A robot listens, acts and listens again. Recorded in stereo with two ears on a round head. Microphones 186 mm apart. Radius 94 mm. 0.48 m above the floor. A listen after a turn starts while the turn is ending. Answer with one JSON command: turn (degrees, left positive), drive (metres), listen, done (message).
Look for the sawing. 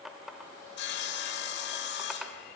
{"turn": 55}
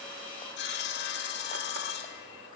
{"turn": 60}
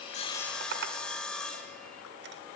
{"done": "Facing the sawing, 1 to 2 m away."}